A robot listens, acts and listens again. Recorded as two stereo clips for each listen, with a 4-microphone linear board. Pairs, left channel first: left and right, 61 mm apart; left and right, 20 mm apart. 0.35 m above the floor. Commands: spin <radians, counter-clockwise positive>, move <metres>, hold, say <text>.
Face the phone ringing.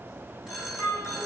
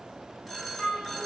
spin -0.52
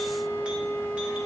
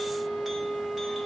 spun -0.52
hold
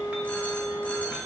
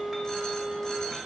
hold
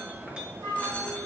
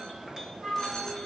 say I heard a phone ringing, but can't make it out now. It was about 20° left or 140° right.